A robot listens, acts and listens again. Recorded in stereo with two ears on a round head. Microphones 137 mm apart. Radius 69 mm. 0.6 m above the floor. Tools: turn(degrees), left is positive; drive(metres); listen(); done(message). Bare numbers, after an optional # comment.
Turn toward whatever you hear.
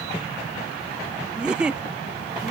turn(-30)
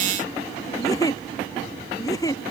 # So it is at 25° left.
turn(25)
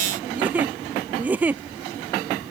# The giggle is now 10° right.
turn(-10)
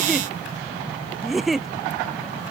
done("Found it: a giggle, straight ahead.")